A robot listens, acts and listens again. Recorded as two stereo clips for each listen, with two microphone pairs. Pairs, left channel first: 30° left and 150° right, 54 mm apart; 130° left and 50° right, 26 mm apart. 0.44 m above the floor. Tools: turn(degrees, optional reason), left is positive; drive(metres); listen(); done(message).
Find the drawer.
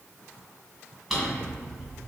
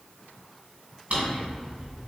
turn(degrees=-60, reason="The drawer: 60° right.")
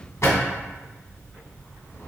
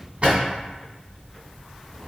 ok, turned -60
done("Facing the drawer, 1 to 2 m away.")